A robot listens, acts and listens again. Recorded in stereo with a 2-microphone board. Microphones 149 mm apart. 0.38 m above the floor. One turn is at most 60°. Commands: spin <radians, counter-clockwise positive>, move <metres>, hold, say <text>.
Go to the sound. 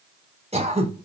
spin -0.79
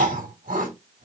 spin -1.05
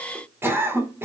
spin -0.26
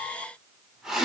move 1.0
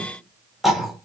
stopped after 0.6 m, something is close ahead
say Something is in my way. I am facing the throat clearing but have not reached it.